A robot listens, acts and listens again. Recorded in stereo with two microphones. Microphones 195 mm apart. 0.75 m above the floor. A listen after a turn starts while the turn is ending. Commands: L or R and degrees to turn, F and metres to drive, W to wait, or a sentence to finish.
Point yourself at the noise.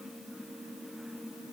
W
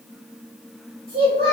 R55
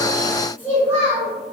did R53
R20
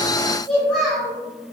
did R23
Found it: a child speaking, straight ahead, 2 to 4 m away.